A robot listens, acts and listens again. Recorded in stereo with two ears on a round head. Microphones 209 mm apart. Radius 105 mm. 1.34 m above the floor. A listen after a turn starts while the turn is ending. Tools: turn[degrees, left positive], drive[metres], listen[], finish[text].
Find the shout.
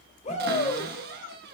Thought: The shout: about 30° left or 150° left.
Action: turn[30]
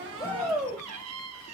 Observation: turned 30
Action: finish[Found it: a shout, straight ahead.]